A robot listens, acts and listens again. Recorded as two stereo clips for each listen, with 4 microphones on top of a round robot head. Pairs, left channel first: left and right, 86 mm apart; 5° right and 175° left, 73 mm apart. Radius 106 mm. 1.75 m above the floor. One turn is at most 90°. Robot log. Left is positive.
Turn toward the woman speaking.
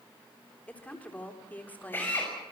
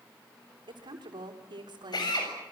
note: The woman speaking: 160° left.
cmd yaw +90
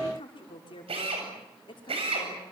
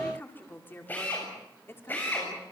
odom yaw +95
note: The woman speaking is now 55° left.
cmd yaw +55
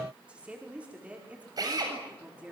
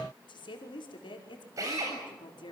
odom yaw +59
note: The woman speaking is now 15° right.
cmd yaw -15
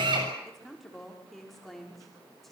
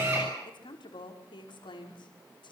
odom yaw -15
end: Facing the woman speaking, over 4 m away.